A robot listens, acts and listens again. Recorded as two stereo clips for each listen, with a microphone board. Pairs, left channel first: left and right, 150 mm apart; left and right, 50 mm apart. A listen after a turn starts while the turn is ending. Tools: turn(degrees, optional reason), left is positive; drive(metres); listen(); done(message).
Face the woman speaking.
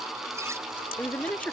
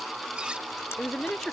turn(degrees=30)
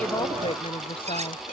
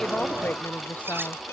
turn(degrees=140, reason="So it is at 140° left.")
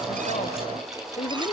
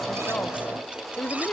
turn(degrees=45, reason="The woman speaking is now 45° left.")
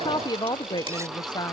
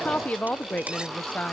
turn(degrees=30, reason="The woman speaking is now 30° left.")
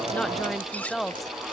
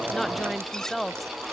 done("Found it: a woman speaking, straight ahead.")